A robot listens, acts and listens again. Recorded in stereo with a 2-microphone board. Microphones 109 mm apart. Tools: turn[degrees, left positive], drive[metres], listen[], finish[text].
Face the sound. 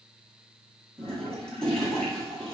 Action: turn[30]
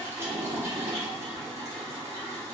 Thought: So it is at 25° right.
Action: turn[-25]
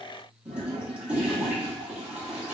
Thought: The toilet flushing is now 10° right.
Action: turn[-10]
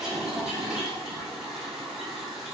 Action: finish[Facing the toilet flushing, 1 to 2 m away.]